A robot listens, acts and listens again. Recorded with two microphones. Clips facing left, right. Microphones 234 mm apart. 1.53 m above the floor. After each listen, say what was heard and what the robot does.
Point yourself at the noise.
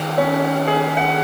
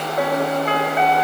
The piano: about 30° left or 150° left. Turn 30° left.
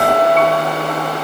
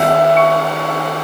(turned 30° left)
Facing the piano, over 4 m away.